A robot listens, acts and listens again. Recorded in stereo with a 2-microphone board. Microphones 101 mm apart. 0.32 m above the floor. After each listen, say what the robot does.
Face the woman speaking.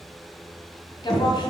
Turn 45° left.
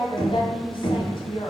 Turn 75° left.
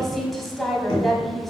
Facing the woman speaking.